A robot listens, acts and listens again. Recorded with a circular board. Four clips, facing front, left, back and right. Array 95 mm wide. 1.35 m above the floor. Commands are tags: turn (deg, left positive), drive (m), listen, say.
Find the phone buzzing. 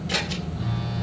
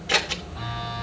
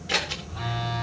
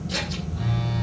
<turn deg="150"/>
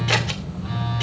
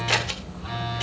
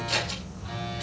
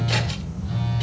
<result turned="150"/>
<turn deg="70"/>
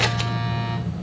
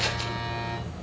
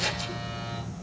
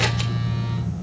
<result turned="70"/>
<turn deg="15"/>
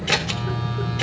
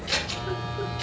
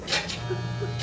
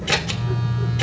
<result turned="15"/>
<say>Found it: a phone buzzing, straight ahead.</say>